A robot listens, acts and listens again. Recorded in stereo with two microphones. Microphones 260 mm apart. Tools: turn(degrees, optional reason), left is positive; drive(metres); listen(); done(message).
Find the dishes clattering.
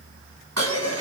turn(degrees=-75, reason="The dishes clattering: about 75° right or 105° right.")
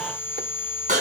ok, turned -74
turn(degrees=-30, reason="So it is at 30° right.")
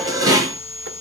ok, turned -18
turn(degrees=-15, reason="The dishes clattering is now 15° right.")
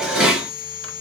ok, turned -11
done("Found it: dishes clattering, straight ahead.")